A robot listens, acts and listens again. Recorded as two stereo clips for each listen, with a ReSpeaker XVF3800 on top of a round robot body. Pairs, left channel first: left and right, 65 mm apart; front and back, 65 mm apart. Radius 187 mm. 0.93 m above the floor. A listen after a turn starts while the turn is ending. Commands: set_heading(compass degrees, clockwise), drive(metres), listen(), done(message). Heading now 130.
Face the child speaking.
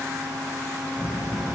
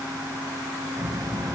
set_heading(330)
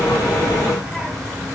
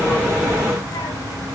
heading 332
done("Found it: a child speaking, straight ahead.")